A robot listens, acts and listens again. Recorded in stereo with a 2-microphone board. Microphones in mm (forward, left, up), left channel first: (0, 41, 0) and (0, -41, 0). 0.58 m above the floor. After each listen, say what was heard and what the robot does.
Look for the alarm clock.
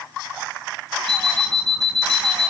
The alarm clock: about 70° right or 110° right. Turn 70° right.
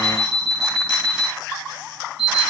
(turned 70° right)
Facing the alarm clock, 2 to 4 m away.